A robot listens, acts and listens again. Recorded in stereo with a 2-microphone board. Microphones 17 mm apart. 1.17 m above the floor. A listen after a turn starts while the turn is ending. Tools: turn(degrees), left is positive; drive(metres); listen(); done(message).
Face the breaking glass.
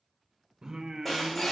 turn(degrees=-30)
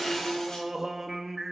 listen()
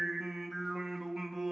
done("I heard breaking glass, but can't make it out now. It was about 25° left or 145° right.")